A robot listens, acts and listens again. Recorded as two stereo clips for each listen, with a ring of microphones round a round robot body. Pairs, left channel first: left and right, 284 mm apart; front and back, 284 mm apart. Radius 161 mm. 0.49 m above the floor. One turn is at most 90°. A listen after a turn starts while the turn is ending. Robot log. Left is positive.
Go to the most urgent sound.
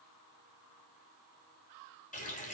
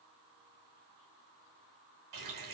cmd idle
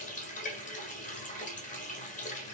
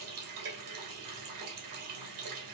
cmd idle
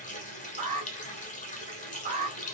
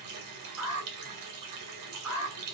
note: The alarm: 150° right.
cmd yaw -90
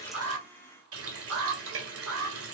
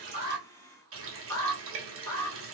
note: The alarm is now 80° right.
cmd yaw -80
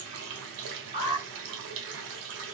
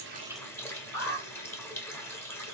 note: The alarm is now 30° right.
cmd yaw -30
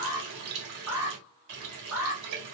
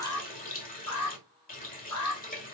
note: The alarm is now 10° right.
cmd yaw -10
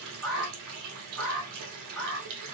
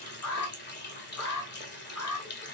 cmd fwd 1.0
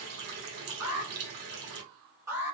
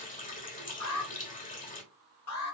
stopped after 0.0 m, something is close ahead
note: The alarm is now 10° right.
cmd yaw -10
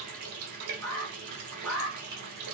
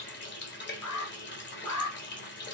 end: Blocked. The alarm is further on, straight ahead.